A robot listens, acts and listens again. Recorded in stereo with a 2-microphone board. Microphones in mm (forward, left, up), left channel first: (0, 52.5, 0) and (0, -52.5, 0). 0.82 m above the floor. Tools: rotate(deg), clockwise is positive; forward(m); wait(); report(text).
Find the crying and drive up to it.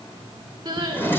rotate(40)
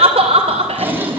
rotate(100)
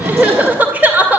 rotate(15)
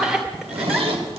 forward(1.0)
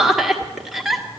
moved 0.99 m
forward(1.0)
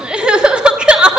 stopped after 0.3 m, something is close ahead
rotate(10)
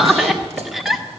report("I am next to the crying.")